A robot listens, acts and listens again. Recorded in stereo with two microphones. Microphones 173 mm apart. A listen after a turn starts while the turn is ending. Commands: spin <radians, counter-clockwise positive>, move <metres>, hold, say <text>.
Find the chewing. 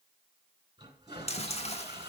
spin 0.61
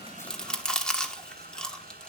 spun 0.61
say Facing the chewing.